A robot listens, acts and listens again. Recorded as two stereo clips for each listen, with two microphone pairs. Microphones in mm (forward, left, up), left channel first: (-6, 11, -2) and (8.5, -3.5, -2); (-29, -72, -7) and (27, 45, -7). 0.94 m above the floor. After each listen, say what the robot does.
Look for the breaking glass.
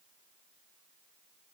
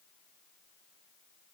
Keep listening.
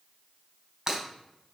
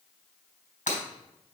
Turn 105° right.
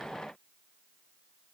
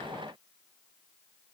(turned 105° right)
Facing where the breaking glass came from. I can't hear it now.